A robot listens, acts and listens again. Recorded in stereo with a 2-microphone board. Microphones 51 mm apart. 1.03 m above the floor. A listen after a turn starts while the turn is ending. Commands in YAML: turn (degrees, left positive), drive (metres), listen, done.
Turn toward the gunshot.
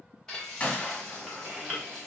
turn: 25
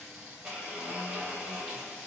listen: true
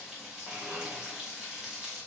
done: "I heard a gunshot, but can't make it out now. It was about straight ahead or 130° left."